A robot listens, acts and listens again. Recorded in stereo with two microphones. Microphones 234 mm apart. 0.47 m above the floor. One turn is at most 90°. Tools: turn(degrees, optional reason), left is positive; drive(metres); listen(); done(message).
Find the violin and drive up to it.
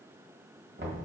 listen()
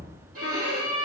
turn(degrees=-90)
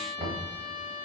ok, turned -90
drive(metres=1.0)
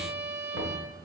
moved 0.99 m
turn(degrees=-10, reason="The violin is now 10° right.")
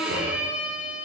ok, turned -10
drive(metres=1.0)
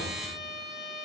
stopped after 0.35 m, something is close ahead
done("I am next to the violin.")